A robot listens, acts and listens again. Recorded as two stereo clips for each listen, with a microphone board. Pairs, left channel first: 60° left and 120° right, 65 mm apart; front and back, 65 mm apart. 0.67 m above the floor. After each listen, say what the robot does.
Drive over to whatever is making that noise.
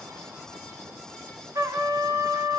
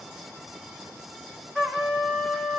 Turn 90° right.
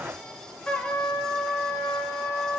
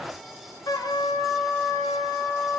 Turn 20° right.
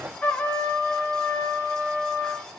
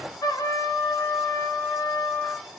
Drive 1.0 m forward.
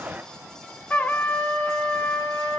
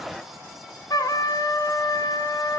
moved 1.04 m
Turn 10° right.
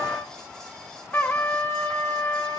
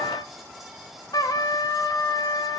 Drive 1.0 m forward.
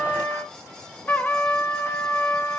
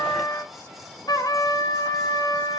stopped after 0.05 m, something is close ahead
Arrived at the trumpet, straight ahead.